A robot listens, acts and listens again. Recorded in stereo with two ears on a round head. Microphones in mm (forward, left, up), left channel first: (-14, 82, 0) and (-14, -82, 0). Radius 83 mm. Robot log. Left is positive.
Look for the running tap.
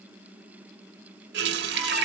note: The running tap: about 60° right or 120° right.
cmd yaw -60
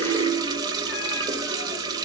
note: So it is at 25° right.
cmd yaw -25
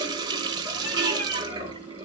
note: The running tap is now 25° right.
cmd yaw -25
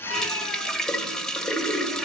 end: Facing the running tap.